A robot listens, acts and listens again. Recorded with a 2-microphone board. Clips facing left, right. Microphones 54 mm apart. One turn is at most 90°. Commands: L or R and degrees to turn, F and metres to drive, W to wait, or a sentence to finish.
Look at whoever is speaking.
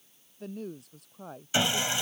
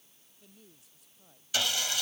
L65
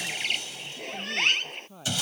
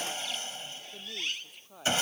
Found it: a woman speaking, straight ahead.